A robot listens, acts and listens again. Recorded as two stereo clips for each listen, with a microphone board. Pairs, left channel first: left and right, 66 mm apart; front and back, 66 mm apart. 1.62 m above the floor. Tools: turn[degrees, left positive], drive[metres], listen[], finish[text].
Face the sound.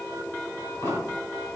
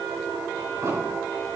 Thought: The explosion: 140° left.
Action: turn[140]
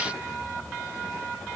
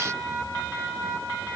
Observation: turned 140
Action: finish[I heard an explosion from this way, but can't make it out now.]